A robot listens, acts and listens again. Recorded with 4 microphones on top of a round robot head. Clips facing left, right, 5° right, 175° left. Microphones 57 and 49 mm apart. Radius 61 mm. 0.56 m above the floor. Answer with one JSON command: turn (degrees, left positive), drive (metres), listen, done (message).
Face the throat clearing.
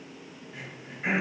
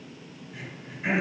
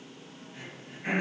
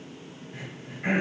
{"turn": 150}
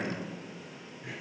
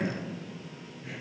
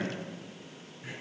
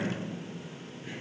{"turn": 15}
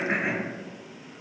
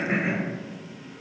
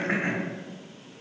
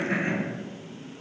{"done": "Found it: throat clearing, straight ahead."}